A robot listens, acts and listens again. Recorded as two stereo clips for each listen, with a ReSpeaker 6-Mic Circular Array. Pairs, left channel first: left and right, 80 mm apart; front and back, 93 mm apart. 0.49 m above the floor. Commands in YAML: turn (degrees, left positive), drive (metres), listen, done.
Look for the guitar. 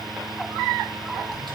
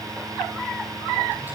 listen: true
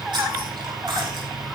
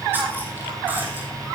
listen: true
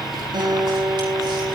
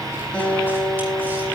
turn: -75
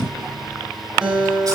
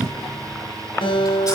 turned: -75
turn: -15
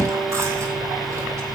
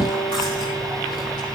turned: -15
listen: true
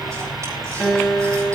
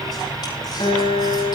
done: "Found it: a guitar, straight ahead."